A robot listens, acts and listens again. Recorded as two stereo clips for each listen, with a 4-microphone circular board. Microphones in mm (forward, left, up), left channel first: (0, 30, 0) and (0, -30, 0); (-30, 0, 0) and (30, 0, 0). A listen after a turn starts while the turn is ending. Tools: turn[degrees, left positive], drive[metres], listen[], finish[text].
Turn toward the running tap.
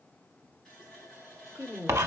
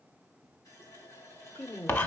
Thought: The running tap: 175° left.
Action: turn[175]
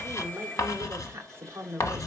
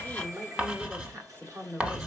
Thought: The running tap is now 10° left.
Action: turn[10]
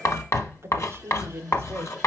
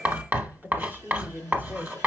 Action: listen[]
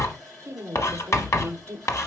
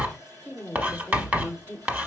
Action: finish[Found it: a running tap, straight ahead, 2 to 4 m away.]